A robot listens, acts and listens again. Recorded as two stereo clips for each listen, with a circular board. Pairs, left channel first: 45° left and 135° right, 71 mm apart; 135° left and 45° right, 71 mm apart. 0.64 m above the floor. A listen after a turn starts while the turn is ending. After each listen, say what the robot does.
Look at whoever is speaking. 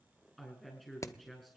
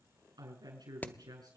Turn 40° right.
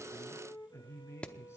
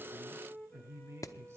Facing the woman speaking.